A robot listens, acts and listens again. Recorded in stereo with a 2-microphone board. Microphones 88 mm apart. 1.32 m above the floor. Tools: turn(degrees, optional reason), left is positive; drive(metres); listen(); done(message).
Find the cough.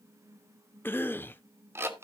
turn(degrees=25, reason="The cough: about 25° left or 155° left.")
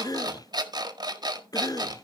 turn(degrees=125, reason="So it is at 125° left.")
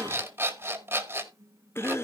turn(degrees=35, reason="The cough is now 35° left.")
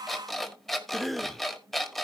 done("Facing the cough.")